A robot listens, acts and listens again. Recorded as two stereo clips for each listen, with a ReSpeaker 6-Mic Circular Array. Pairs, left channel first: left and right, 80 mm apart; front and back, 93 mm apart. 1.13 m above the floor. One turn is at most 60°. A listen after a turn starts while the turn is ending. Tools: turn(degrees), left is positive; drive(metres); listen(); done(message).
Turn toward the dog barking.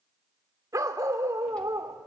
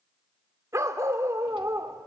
turn(degrees=-60)
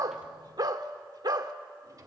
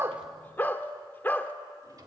turn(degrees=-60)
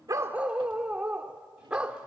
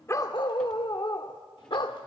turn(degrees=-15)
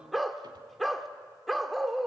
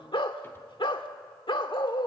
done("Facing the dog barking.")